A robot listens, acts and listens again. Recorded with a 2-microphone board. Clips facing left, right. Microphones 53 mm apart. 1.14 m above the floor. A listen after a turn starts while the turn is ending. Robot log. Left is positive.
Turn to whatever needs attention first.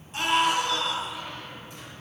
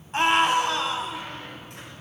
note: The scream: about 55° right or 125° right.
cmd yaw -55
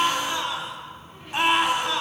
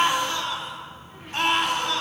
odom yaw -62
end: Found it: a scream, straight ahead, 2 to 4 m away.